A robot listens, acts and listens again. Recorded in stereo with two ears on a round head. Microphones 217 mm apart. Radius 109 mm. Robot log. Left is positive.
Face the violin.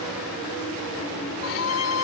note: The violin: about 55° left or 125° left.
cmd yaw +55
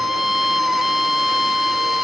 end: Found it: a violin, straight ahead.